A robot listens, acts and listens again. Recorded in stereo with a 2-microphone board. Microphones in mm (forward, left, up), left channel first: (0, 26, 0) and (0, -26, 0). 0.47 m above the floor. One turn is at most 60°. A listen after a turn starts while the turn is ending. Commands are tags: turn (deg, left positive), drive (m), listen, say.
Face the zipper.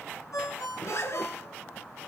<turn deg="60"/>
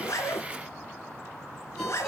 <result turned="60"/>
<turn deg="60"/>
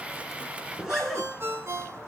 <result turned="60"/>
<turn deg="-10"/>
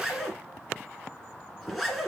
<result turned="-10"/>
<say>Found it: a zipper, straight ahead.</say>